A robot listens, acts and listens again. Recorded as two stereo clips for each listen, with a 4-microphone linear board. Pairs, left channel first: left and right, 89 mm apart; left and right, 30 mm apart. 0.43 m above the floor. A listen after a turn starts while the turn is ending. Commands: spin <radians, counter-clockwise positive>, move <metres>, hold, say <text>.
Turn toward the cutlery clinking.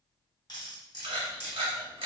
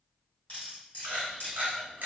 spin 0.87
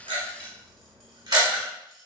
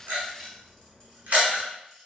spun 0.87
hold
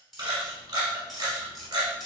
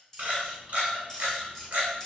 say Found it: cutlery clinking, straight ahead.